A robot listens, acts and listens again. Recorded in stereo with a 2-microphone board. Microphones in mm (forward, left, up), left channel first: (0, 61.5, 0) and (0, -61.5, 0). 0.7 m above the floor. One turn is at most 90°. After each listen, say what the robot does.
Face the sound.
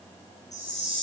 Turn 70° left.
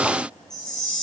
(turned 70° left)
Facing the chime.